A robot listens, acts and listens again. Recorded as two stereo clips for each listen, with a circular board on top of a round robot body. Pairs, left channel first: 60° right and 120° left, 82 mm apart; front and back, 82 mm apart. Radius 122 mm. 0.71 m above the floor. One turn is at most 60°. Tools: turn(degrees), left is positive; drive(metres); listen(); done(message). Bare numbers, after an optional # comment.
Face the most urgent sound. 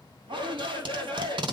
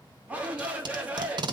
# The shout: 105° left.
turn(60)
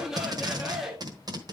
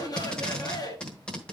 # The shout is now 40° left.
turn(40)
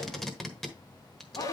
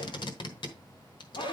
# The shout is now 15° right.
turn(-15)
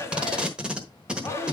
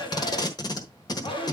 done("Facing the shout, 2 to 4 m away.")